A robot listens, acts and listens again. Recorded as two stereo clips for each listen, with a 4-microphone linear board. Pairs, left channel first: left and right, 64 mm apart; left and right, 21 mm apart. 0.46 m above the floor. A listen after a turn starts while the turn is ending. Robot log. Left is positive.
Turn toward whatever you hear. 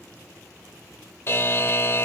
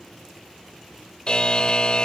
note: The buzzer: about 40° left or 140° left.
cmd yaw +40
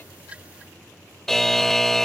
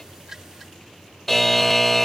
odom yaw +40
note: So it is at 10° left.
cmd yaw +10
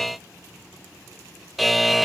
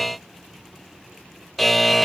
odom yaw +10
end: Facing the buzzer.